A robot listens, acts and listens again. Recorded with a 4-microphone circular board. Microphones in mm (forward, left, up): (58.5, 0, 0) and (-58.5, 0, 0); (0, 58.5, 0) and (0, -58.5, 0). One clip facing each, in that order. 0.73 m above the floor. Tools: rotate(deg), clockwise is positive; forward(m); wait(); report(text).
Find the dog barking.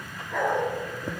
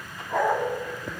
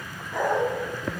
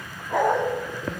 rotate(125)
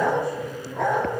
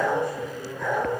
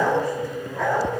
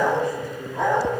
rotate(25)
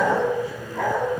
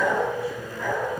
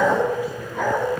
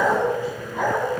rotate(10)
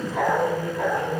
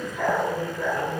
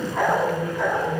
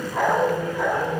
rotate(10)
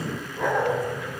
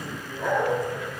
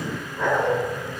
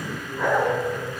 rotate(10)
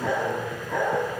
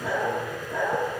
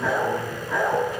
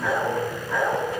report("Facing the dog barking.")